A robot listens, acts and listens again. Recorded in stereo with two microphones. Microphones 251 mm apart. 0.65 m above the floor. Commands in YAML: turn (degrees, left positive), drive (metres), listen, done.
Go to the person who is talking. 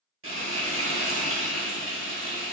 listen: true
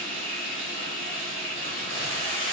listen: true
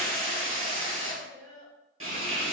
turn: 60
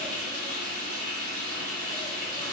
listen: true
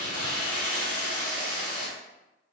listen: true
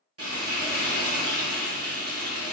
done: "I heard a child speaking, but can't make it out now. It was about straight ahead or 60° left. I did not reach it."